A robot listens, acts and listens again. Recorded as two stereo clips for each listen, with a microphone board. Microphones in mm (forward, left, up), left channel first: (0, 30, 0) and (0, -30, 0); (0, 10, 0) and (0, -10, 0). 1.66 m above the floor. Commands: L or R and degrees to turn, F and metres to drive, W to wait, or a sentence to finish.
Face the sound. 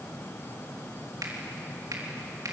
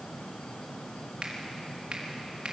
R90
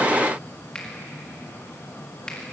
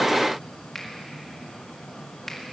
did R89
L15
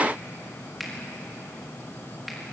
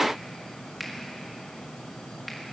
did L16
Facing the finger snap.